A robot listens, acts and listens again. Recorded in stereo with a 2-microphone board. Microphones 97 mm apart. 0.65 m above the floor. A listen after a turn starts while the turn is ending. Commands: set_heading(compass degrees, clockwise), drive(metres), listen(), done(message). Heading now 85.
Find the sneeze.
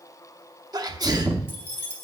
set_heading(130)
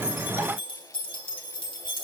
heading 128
listen()
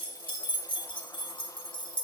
done("I heard a sneeze, but can't make it out now. It was about straight ahead or 95° right.")